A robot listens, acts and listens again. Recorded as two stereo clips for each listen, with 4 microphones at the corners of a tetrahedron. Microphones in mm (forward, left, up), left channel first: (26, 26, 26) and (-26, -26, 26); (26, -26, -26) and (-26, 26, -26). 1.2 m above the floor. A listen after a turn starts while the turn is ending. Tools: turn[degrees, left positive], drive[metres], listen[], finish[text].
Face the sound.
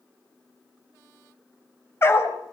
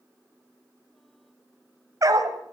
Thought: The dog barking: 100° left.
Action: turn[100]
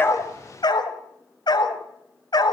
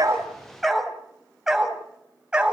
Thought: The dog barking is now 60° left.
Action: turn[60]
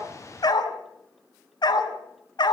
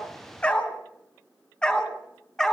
Thought: The dog barking is now 35° left.
Action: turn[35]
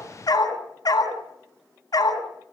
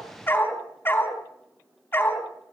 Thought: The dog barking is now 15° left.
Action: turn[15]
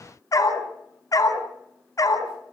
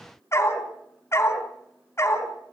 Action: finish[Facing the dog barking.]